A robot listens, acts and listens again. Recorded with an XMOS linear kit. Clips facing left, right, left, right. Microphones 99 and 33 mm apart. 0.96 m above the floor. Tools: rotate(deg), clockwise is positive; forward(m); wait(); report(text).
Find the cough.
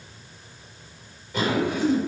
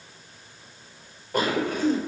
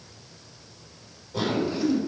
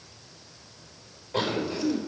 rotate(45)
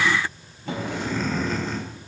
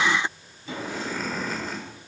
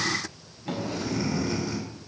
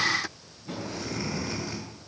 report("Facing the cough.")